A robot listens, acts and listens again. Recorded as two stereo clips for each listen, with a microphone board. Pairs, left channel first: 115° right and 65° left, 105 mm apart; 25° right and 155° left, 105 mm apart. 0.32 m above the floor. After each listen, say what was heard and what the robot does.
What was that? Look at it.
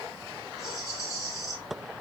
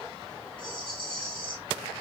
The rattle: 55° right. Turn 55° right.
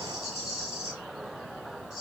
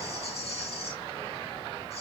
The rattle is now 20° right. Turn 20° right.
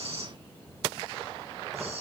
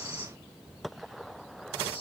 Facing the rattle.